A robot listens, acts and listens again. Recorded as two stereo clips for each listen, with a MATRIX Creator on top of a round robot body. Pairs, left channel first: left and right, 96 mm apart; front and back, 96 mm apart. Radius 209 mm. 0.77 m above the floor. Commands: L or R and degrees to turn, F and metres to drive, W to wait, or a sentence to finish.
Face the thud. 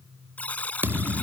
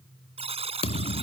R20
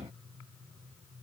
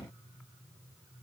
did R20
I heard a thud from this way, but can't make it out now.